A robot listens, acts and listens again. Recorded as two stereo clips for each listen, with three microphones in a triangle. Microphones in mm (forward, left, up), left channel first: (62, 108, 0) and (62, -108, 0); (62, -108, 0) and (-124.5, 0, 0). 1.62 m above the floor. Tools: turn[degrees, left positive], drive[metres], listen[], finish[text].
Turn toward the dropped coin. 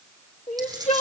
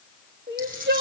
Thought: The dropped coin: 160° right.
Action: turn[-160]
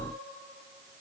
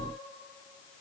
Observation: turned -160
Action: finish[I heard a dropped coin from this way, but can't make it out now.]